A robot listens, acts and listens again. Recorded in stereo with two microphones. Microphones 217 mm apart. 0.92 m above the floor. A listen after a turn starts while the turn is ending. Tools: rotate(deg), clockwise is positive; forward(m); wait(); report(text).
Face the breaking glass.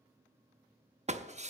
rotate(30)
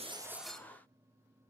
report("Facing the breaking glass, 1 to 2 m away.")